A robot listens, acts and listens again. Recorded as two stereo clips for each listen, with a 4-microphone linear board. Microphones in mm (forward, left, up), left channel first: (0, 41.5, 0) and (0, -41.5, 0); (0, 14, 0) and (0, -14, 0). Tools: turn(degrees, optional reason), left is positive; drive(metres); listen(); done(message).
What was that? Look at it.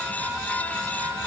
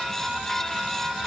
listen()
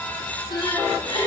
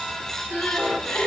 turn(degrees=75, reason="The crying: about 75° left or 105° left.")
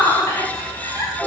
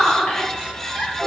turn(degrees=25, reason="So it is at 25° left.")
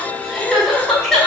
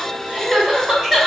done("Found it: crying, straight ahead.")